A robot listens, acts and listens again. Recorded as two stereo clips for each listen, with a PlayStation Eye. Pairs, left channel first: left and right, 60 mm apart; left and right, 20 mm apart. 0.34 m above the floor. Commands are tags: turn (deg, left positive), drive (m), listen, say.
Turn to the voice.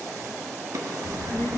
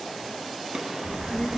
<turn deg="50"/>
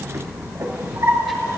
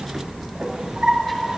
<say>Facing the child speaking, 2 to 4 m away.</say>